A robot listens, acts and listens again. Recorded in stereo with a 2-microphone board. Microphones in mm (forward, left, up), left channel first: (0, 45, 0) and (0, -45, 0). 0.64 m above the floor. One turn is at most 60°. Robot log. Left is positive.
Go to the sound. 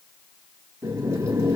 note: The boiling: about 35° right or 145° right.
cmd yaw -35
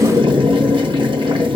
note: So it is at 110° right.
cmd yaw -60
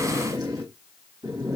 note: The boiling is now 50° right.
cmd yaw -50
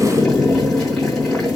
cmd fwd 1.0
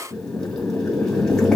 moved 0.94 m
note: The boiling is now 10° left.
cmd yaw +10
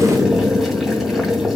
cmd fwd 1.0
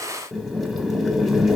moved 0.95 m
cmd fwd 1.0
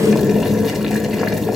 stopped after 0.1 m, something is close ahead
end: Arrived at the boiling, straight ahead.